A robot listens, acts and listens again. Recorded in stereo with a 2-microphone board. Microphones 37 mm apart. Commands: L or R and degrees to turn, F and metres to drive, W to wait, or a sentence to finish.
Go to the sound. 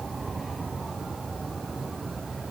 W
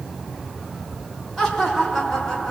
L30
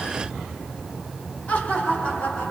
L135
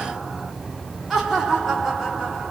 F1.0
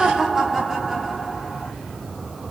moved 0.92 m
R10
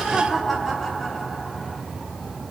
F1.0
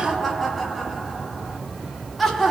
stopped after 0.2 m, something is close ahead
I am next to the laughter.